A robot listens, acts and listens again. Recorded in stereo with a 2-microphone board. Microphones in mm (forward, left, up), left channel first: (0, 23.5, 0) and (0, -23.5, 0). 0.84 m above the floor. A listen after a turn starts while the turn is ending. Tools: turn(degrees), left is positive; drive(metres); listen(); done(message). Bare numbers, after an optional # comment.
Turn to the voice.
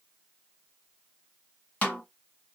listen()
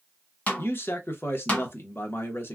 # The man speaking: about 60° left or 120° left.
turn(60)
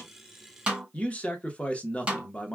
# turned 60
# So it is at 35° left.
turn(35)
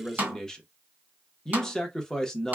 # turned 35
# The man speaking is now 15° left.
turn(15)
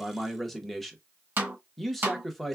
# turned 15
done("Found it: a man speaking, straight ahead.")